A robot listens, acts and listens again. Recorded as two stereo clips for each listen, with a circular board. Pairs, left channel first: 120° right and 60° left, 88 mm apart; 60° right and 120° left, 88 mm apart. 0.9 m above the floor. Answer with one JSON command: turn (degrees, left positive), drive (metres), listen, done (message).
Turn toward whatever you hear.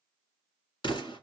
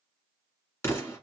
{"turn": -115}
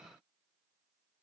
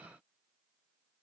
{"done": "Facing where the explosion came from. I can't hear it now."}